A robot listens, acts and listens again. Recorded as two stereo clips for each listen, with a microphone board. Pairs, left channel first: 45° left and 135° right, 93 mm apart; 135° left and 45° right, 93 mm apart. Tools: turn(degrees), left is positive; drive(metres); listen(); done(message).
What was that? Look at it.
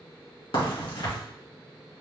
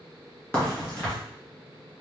turn(degrees=60)
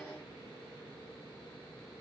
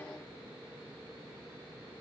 done("I heard a crack from this way, but can't make it out now.")